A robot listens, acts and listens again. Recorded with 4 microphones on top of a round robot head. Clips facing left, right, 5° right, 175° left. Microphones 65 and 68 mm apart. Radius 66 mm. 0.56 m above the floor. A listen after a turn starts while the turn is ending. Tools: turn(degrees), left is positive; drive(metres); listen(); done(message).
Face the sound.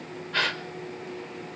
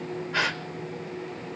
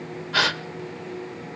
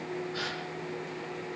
done("Found it: a gasp, straight ahead.")